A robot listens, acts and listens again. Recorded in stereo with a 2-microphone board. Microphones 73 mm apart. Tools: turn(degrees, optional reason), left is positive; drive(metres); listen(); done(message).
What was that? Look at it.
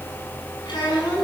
turn(degrees=60, reason="The child speaking: about 60° left or 120° left.")
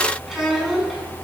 done("Found it: a child speaking, straight ahead.")